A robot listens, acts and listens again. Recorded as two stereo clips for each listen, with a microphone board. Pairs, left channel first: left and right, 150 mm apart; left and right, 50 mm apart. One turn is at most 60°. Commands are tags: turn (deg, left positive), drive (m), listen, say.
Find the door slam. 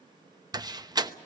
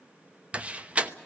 <turn deg="-25"/>
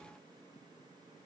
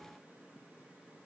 <listen/>
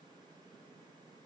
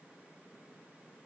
<say>I heard a door slam, but can't make it out now. It was about straight ahead or 130° right.</say>